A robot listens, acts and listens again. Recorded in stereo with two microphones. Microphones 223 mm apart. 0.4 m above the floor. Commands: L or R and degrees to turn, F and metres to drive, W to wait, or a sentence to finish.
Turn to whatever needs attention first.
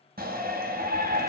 R45
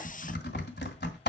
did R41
W
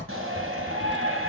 R95
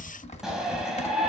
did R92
Facing the shout.